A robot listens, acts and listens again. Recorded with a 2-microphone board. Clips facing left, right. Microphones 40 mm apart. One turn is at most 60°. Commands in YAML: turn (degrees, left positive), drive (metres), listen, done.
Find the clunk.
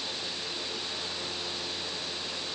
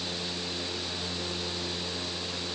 listen: true
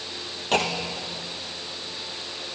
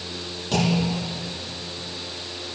turn: 45
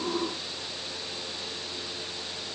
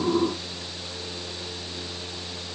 listen: true
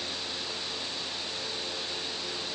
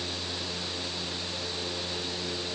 done: "I heard a clunk, but can't make it out now. It was about straight ahead or 90° left."